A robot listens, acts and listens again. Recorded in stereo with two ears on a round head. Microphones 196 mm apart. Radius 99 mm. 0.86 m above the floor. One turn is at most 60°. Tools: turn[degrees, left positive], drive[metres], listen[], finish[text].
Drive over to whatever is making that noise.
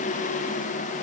Action: listen[]
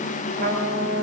Thought: The trumpet: about 45° right or 135° right.
Action: turn[-45]
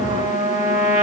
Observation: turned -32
Thought: So it is at 15° right.
Action: turn[-15]
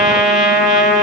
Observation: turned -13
Action: drive[1.0]
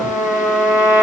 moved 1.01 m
Action: drive[1.0]
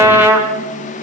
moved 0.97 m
Thought: The trumpet is now 10° right.
Action: turn[-10]
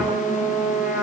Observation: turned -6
Action: drive[1.0]
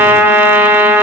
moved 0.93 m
Thought: The trumpet is now 10° right.
Action: turn[-10]
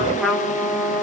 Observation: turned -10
Action: drive[1.0]
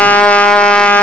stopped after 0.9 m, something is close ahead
Action: finish[Arrived at the trumpet, straight ahead.]